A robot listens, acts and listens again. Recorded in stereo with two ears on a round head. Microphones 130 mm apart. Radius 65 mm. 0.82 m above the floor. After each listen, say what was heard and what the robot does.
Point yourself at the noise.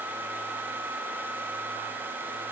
Keep listening.
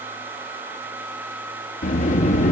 The sliding door: about 50° left or 130° left. Turn 50° left.
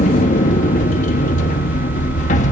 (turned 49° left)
So it is at 65° left. Turn 65° left.
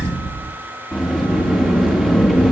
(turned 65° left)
Facing the sliding door.